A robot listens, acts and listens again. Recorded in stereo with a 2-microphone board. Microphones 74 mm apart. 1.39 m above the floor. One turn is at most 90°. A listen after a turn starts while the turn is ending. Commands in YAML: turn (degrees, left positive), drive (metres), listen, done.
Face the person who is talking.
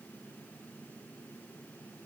listen: true
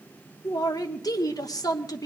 turn: 60
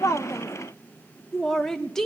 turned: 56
done: "Found it: a man speaking, straight ahead."